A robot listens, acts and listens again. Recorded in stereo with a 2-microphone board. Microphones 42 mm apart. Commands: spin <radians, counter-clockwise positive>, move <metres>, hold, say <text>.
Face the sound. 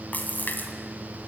spin 0.79
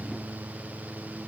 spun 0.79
hold
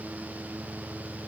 say I heard a splash, but can't make it out now. It was about straight ahead or 90° left.